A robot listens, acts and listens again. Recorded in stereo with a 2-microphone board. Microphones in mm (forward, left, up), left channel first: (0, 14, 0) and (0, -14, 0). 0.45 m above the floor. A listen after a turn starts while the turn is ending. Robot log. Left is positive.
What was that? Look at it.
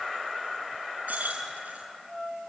note: The keys jangling: about 70° right or 110° right.
cmd yaw -70
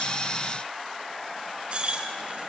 note: So it is at 40° right.
cmd yaw -40
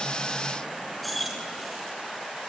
end: Found it: keys jangling, straight ahead.